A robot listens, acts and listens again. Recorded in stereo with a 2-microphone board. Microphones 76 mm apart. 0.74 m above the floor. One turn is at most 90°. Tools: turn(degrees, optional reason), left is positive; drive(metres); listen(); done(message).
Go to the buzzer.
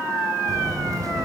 turn(degrees=-55, reason="The buzzer: about 55° right or 125° right.")
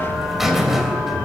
drive(metres=1.0)
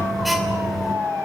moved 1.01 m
drive(metres=1.0)
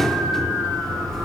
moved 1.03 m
drive(metres=1.0)
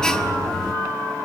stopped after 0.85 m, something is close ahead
turn(degrees=15, reason="The buzzer is now 15° left.")
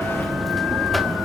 done("Arrived at the buzzer, straight ahead.")